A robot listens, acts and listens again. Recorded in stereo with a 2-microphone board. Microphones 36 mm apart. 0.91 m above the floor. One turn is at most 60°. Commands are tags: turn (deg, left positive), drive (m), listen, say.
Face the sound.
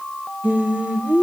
<turn deg="-45"/>
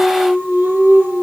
<turn deg="-60"/>
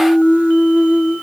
<turn deg="-60"/>
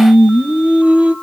<turn deg="-45"/>
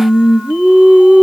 <turn deg="-35"/>
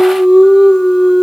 <turn deg="-20"/>
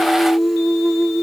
<say>Facing the singing.</say>